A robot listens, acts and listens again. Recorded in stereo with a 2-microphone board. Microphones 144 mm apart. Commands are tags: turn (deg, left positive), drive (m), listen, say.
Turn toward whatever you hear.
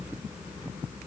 <listen/>
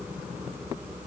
<listen/>
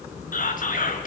<turn deg="70"/>
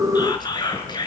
<turn deg="30"/>
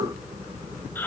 <listen/>
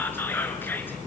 <listen/>
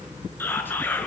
<turn deg="15"/>
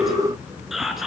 <say>Found it: whispering, straight ahead, over 4 m away.</say>